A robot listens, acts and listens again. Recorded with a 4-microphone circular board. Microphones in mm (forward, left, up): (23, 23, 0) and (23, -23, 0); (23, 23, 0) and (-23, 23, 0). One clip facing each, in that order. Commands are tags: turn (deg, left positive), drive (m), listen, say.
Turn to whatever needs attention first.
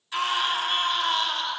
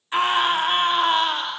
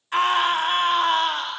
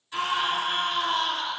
<turn deg="-30"/>
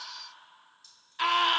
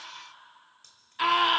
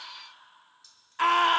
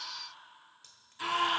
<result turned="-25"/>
<say>Facing the scream, 1 to 2 m away.</say>